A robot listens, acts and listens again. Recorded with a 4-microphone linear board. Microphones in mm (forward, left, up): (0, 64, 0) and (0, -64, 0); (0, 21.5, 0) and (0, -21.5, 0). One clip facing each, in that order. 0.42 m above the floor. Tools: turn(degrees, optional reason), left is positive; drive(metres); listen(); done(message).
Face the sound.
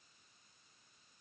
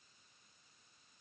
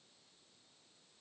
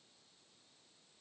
listen()
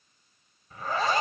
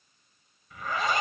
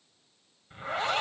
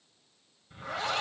turn(degrees=35, reason="The zipper: about 35° left or 145° left.")
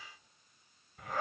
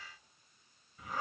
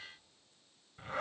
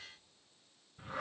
turn(degrees=110, reason="So it is at 110° left.")
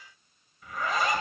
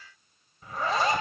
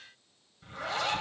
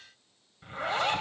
turn(degrees=-35, reason="The zipper is now 35° right.")
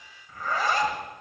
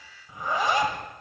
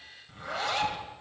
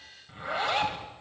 turn(degrees=-20, reason="The zipper is now 20° right.")
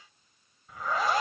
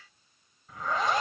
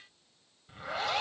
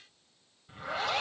done("Facing the zipper, 1 to 2 m away.")